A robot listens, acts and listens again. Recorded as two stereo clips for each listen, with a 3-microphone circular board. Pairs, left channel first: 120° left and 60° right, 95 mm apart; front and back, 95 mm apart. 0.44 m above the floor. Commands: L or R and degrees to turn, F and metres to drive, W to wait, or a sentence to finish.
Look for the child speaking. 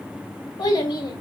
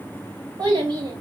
L150
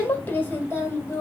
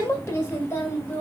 L65
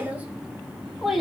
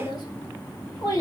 L30
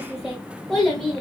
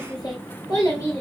L40
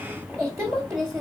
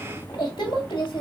Found it: a child speaking, straight ahead, 1 to 2 m away.